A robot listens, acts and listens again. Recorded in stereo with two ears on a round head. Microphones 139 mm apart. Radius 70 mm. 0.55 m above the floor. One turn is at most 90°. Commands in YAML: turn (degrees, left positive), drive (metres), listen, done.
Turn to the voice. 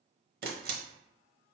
listen: true
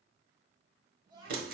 turn: -30
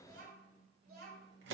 turn: -90
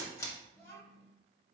turn: 20
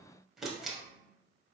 done: "Found it: a child speaking, straight ahead, 2 to 4 m away."